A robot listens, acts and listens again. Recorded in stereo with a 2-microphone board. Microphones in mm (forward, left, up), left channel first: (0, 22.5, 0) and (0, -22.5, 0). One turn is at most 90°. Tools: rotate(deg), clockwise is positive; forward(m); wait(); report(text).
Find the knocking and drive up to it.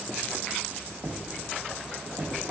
rotate(35)
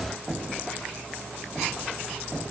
forward(1.0)
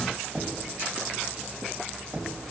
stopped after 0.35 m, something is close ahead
report("Something is in my way. I am facing the knocking but have not reached it.")